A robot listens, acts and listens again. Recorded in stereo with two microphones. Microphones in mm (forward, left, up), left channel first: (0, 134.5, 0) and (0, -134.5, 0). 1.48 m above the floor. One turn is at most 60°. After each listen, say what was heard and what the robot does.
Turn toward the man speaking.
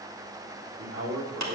The man speaking: about 60° right or 120° right. Turn 60° right.
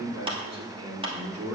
So it is at 60° right. Turn 60° right.
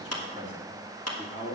The man speaking is now 20° left. Turn 20° left.
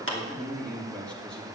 Facing the man speaking, 2 to 4 m away.